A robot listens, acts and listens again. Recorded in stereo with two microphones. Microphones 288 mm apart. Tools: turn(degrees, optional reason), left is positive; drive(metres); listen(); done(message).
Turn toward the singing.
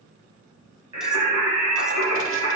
turn(degrees=-90)
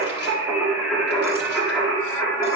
turn(degrees=10, reason="So it is at 10° left.")
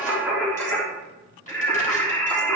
turn(degrees=10, reason="The singing is now 10° left.")
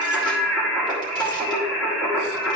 done("Facing the singing.")